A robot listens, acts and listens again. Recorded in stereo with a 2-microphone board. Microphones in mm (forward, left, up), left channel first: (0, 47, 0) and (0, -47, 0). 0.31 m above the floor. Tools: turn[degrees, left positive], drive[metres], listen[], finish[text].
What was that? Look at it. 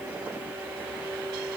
Action: listen[]
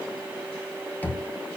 Thought: The knocking: about 20° left or 160° left.
Action: turn[20]
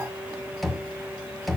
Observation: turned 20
Action: finish[Found it: knocking, straight ahead, 1 to 2 m away.]